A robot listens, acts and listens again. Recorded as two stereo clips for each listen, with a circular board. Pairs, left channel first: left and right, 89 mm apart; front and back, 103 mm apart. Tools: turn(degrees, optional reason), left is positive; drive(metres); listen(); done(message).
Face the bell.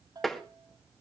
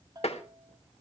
turn(degrees=-130, reason="The bell: 130° right.")
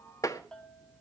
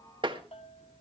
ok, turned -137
turn(degrees=10, reason="The bell is now 10° left.")
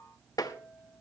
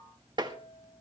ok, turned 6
done("Facing the bell.")